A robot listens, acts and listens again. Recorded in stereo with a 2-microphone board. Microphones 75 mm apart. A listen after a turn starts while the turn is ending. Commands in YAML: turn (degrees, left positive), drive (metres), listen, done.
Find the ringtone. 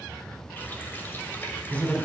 listen: true
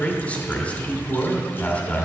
listen: true
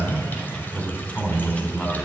done: "I can't make out a ringtone to turn to."